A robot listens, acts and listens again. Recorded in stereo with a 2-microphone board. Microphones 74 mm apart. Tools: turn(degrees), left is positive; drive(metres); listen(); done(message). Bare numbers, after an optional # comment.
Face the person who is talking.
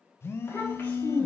# The child speaking: about 25° left or 155° left.
turn(25)
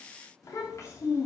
# The child speaking: about 40° left or 140° left.
turn(40)
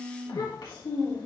# So it is at 105° left.
turn(105)
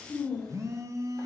# The child speaking is now 15° left.
turn(15)
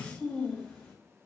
done("Facing the child speaking, over 4 m away.")